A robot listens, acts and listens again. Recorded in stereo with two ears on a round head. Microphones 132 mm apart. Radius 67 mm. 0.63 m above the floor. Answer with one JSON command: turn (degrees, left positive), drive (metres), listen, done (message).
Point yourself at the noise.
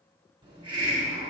{"turn": -35}
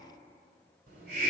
{"turn": -110}
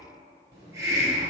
{"turn": -25}
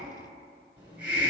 {"turn": -10}
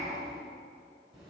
{"done": "Found it: a hiss, straight ahead."}